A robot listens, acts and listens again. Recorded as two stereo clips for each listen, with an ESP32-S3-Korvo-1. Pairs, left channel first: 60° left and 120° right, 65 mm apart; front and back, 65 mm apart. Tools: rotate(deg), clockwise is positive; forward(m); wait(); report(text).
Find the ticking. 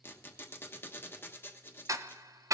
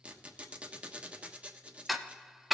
rotate(90)
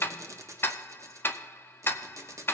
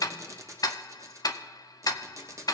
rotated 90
report("Found it: ticking, straight ahead.")